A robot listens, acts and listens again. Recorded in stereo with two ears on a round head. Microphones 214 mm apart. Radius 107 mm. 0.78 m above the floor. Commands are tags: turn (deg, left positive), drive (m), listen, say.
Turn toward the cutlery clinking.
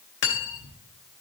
<turn deg="50"/>
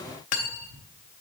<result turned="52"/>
<turn deg="75"/>
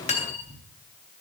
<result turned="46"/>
<turn deg="30"/>
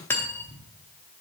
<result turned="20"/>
<turn deg="10"/>
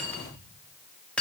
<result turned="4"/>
<say>Facing the cutlery clinking.</say>